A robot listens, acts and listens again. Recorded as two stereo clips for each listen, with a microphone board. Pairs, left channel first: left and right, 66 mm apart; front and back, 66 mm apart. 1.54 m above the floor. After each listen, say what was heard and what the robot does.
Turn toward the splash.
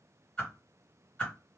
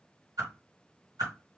Keep listening.
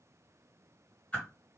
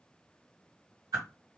Keep listening.
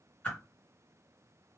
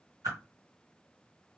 I can't make out a splash to turn to.